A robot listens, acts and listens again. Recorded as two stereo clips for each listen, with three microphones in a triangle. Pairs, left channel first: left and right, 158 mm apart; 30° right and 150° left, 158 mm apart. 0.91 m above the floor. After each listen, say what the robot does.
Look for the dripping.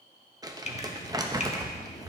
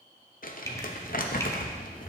Turn 40° left.
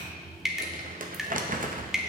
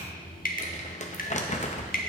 Found it: dripping, straight ahead, under 1 m away.